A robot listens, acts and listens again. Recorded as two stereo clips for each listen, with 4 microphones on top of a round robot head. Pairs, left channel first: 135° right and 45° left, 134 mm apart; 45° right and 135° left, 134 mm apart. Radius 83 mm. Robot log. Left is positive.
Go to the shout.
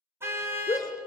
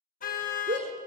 note: The shout: 160° left.
cmd yaw +160
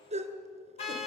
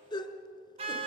cmd fwd 1.0
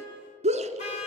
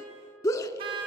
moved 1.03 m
note: The shout is now 15° left.
cmd yaw +15
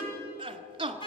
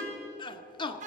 cmd fwd 1.0
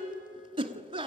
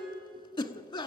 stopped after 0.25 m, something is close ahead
end: Arrived at the shout, straight ahead.